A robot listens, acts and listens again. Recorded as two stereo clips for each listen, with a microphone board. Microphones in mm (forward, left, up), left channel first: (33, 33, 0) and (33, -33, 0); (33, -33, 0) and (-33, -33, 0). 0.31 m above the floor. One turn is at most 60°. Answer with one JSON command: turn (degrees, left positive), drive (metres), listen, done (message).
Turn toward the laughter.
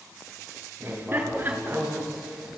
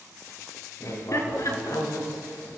{"turn": -30}
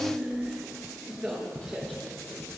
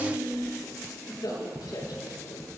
{"done": "Found it: laughter, straight ahead, over 4 m away."}